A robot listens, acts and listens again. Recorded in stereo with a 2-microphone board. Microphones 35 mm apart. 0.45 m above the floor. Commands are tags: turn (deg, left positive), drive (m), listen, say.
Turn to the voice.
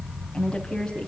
<turn deg="20"/>
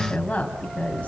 <turn deg="145"/>
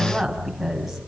<say>Facing the woman speaking.</say>